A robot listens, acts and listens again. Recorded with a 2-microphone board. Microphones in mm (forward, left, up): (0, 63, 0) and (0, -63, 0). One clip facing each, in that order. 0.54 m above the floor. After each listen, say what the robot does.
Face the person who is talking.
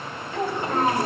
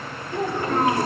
Turn 30° left.
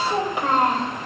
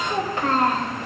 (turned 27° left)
Turn 20° left.
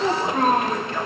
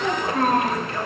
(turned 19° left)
Turn 30° left.
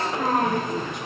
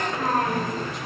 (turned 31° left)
Turn 20° left.
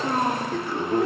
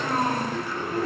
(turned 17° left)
Turn 20° left.
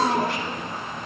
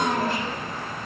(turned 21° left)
Turn 10° left.
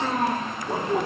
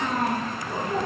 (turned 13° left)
Facing the child speaking.